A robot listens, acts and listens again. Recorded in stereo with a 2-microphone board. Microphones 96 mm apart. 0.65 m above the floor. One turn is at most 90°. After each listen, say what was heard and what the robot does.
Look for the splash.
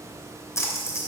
The splash: about 35° left or 145° left. Turn 35° left.
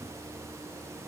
Keep listening.
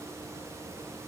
I heard a splash, but can't make it out now. It was about straight ahead or 110° left.